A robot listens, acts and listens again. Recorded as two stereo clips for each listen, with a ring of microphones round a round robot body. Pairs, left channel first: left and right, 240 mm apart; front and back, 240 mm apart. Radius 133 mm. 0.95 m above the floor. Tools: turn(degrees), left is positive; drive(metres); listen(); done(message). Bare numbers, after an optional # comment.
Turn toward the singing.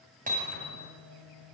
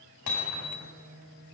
# The singing: 115° right.
turn(-115)
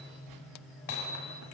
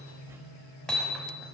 # The singing is now 10° left.
turn(10)
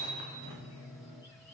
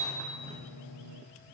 done("Facing the singing.")